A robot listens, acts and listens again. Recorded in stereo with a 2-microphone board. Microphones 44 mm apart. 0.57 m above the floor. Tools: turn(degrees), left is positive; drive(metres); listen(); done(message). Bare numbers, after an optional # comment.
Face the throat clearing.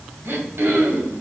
# The throat clearing: about 65° right or 115° right.
turn(-65)
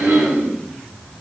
# So it is at 50° right.
turn(-50)
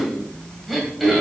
done("Facing the throat clearing, 2 to 4 m away.")